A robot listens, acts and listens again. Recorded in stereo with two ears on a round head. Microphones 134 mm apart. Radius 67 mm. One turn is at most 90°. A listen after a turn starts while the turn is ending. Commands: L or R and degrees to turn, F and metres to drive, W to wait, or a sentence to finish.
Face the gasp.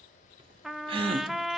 R35
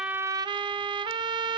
W
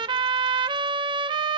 I heard a gasp, but can't make it out now. It was about straight ahead or 110° right.